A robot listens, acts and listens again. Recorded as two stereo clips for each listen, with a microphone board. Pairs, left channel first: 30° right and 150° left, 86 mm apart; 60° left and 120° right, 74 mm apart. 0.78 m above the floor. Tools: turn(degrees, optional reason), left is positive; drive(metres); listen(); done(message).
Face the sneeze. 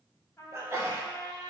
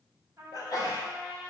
turn(degrees=90, reason="The sneeze: 90° left.")
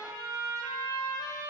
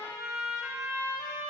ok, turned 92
done("Facing where the sneeze came from. I can't hear it now.")